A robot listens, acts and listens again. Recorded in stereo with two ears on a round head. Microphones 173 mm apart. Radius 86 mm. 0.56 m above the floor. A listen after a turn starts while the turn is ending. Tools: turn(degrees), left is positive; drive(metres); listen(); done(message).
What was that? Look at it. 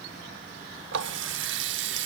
turn(degrees=-70)
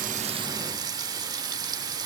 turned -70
turn(degrees=-25)
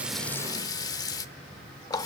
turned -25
turn(degrees=20)
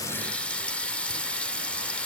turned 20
done("Facing the running tap.")